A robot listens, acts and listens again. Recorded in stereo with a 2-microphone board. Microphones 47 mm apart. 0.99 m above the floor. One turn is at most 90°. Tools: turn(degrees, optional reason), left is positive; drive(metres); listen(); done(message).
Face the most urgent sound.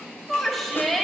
turn(degrees=30)
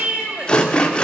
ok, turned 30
turn(degrees=-20, reason="So it is at 20° right.")
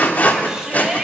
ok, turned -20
done("Facing the shout, 2 to 4 m away.")